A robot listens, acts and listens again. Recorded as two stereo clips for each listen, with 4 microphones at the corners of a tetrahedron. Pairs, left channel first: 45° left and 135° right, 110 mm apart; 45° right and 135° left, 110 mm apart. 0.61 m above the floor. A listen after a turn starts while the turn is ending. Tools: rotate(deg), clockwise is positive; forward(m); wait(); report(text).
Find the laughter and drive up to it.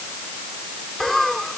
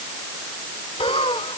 rotate(40)
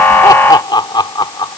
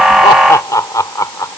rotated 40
forward(1.0)
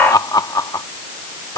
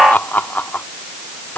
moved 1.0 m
rotate(-20)
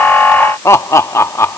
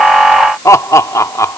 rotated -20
forward(1.0)
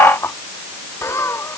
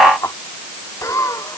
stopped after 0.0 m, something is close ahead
report("Arrived at the laughter, straight ahead.")